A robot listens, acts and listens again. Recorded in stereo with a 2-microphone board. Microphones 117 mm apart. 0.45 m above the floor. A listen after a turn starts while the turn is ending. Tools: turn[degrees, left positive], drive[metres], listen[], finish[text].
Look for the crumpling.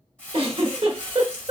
Action: turn[30]
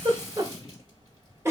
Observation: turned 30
Action: listen[]
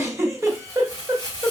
Thought: So it is at 140° left.
Action: turn[140]
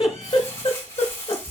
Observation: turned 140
Thought: The crumpling is now 25° left.
Action: turn[25]
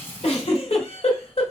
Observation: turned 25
Action: listen[]
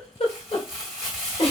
Action: finish[Found it: crumpling, straight ahead.]